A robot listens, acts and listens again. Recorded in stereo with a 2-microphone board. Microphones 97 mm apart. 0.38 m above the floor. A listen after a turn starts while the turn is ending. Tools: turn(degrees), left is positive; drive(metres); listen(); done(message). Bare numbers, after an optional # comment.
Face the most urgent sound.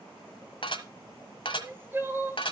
# The crying: about 20° right or 160° right.
turn(-20)
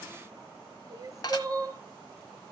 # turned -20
# So it is at 140° right.
turn(-140)
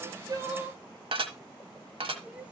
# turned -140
# The crying is now 15° right.
turn(-15)
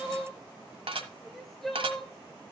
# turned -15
done("Facing the crying, 1 to 2 m away.")